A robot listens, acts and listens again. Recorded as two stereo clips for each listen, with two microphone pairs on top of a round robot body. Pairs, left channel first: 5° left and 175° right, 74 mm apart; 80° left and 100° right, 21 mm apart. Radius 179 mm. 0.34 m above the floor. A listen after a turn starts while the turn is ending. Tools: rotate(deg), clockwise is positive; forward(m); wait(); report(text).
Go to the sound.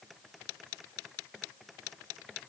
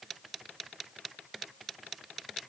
wait()
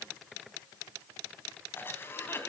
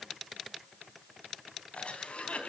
rotate(-65)
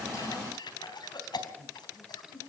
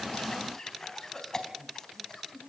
rotate(-15)
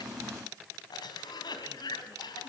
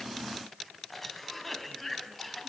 forward(1.0)
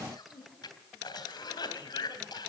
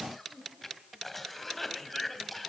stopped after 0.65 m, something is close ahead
report("Blocked. The cough is further on, straight ahead.")